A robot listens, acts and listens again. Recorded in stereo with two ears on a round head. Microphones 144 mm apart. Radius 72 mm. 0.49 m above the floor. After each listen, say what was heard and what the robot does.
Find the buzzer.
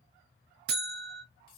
The buzzer: about 65° right or 115° right. Turn 65° right.
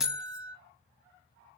Found it: a buzzer, straight ahead.